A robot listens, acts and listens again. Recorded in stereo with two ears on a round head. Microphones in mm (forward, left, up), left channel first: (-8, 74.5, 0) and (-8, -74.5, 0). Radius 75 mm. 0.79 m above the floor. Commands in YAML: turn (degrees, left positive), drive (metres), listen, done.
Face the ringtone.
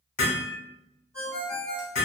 turn: 30
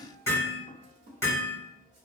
listen: true
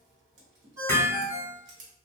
turn: -15
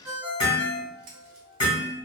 done: "Found it: a ringtone, straight ahead."